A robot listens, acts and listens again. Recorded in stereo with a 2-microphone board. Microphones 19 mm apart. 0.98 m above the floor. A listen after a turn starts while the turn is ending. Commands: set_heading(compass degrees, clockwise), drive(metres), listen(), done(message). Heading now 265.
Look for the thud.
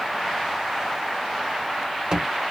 set_heading(310)
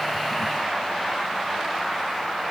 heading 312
listen()
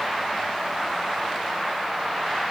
done("I heard a thud, but can't make it out now. It was about 5° left or 90° right.")